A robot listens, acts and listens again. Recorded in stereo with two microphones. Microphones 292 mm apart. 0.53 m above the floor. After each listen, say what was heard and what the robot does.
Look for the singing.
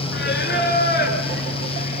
The singing: about 35° left or 145° left. Turn 35° left.
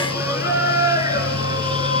So it is at 20° right. Turn 20° right.
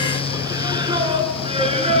The singing is now 20° right. Turn 20° right.
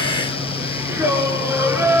The singing is now 10° right. Turn 10° right.
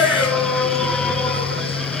Found it: singing, straight ahead.